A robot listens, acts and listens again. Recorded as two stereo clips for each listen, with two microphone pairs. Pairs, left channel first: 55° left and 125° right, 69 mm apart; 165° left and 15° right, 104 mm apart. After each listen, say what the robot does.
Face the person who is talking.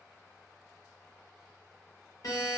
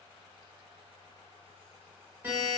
Keep listening.
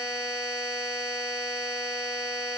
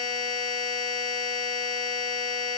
Keep listening.
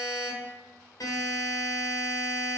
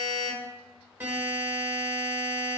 I can't make out anyone speaking to turn to.